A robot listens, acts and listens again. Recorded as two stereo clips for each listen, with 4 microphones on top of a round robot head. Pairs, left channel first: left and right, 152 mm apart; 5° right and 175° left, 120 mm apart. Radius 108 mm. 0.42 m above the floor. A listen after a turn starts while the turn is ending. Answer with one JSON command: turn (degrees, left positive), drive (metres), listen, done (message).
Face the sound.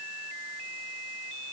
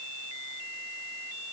{"listen": true}
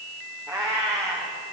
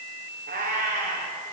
{"turn": -160}
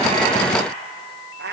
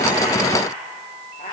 {"turn": -65}
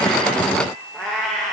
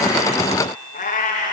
{"done": "Facing the cat meowing."}